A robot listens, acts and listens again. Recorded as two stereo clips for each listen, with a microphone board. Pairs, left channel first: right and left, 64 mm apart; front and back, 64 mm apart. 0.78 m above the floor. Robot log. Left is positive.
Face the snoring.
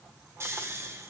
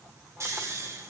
note: The snoring: 140° left.
cmd yaw +140
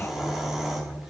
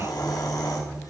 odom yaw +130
end: Facing the snoring, 1 to 2 m away.